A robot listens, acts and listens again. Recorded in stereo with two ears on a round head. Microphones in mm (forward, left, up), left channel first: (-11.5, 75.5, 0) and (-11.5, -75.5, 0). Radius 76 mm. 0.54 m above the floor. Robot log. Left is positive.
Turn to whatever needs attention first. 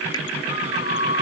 note: The scream: about 75° left or 105° left.
cmd yaw +75
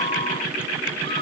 note: So it is at 30° left.
cmd yaw +30
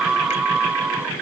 end: Found it: a scream, straight ahead.